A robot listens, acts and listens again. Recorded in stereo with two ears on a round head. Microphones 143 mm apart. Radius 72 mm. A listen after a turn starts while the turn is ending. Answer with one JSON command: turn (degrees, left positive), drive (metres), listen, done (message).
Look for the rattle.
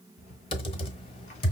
{"turn": 50}
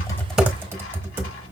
{"listen": true}
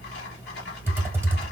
{"turn": 80}
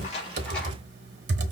{"listen": true}
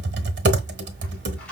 {"done": "Found it: a rattle, straight ahead."}